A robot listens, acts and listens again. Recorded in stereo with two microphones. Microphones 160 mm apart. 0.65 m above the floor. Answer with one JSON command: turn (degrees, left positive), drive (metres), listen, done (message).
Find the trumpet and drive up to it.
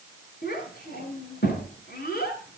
{"listen": true}
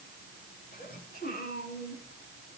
{"listen": true}
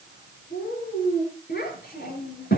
{"done": "I can't make out a trumpet to turn to."}